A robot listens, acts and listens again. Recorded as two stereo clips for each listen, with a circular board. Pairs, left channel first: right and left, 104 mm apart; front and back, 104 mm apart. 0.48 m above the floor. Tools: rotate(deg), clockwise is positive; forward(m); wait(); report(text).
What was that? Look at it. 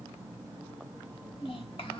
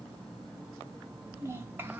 rotate(110)
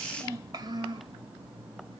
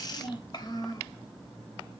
rotate(-50)
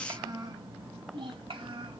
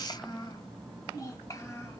rotate(-55)
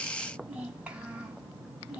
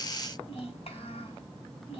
rotate(-10)
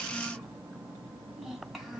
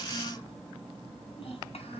report("Found it: a child speaking, straight ahead, 1 to 2 m away.")